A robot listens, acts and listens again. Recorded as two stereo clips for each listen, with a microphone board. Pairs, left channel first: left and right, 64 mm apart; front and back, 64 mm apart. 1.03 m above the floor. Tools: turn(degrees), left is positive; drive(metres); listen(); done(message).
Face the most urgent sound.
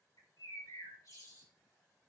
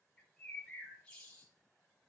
listen()
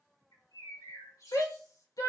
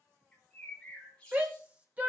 turn(degrees=115)
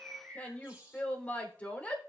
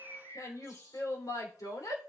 turn(degrees=25)
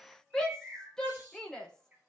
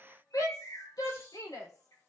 turn(degrees=10)
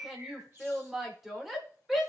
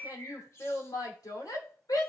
done("Facing the shout.")